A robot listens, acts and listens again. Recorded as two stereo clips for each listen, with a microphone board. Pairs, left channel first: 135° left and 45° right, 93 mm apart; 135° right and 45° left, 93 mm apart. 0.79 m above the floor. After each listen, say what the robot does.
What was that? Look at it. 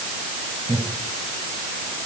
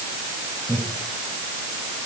Turn 70° right.
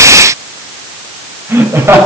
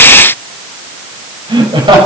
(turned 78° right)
Turn 15° left.
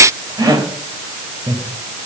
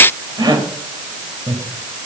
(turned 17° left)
Found it: laughter, straight ahead, 2 to 4 m away.